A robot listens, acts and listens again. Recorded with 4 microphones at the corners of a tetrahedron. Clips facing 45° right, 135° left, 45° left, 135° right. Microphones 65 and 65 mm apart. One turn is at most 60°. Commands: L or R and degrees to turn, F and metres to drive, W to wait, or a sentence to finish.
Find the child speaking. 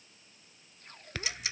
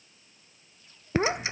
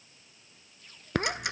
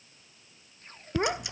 L60
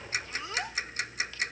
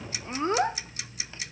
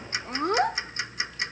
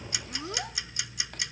L60
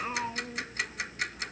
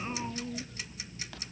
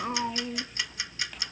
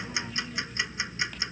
L20
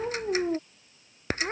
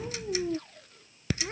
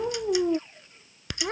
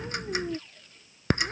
Found it: a child speaking, straight ahead.